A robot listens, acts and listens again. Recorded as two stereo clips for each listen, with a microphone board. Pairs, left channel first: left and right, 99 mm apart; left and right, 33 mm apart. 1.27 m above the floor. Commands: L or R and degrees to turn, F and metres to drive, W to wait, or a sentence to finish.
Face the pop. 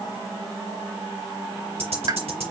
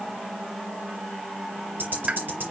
R40
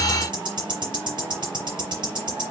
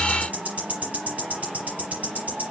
W
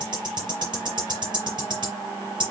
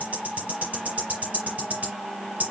I heard a pop, but can't make it out now. It was about straight ahead or 100° right.